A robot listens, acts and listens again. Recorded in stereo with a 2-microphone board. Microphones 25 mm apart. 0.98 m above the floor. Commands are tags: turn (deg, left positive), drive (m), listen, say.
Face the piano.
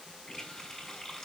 <listen/>
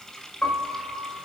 <turn deg="75"/>
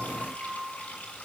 <turn deg="30"/>
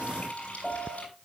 <turn deg="10"/>
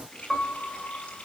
<say>Found it: a piano, straight ahead, over 4 m away.</say>